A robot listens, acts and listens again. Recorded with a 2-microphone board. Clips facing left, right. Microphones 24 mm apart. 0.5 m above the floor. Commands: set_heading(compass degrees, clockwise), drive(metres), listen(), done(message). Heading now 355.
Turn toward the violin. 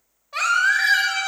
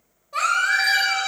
set_heading(30)
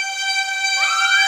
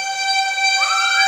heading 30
done("Facing the violin.")